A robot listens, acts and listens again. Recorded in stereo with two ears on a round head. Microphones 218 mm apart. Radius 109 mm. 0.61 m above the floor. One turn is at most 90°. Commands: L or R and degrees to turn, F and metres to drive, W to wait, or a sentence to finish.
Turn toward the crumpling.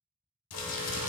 L70
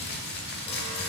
L40
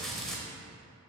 Found it: crumpling, straight ahead.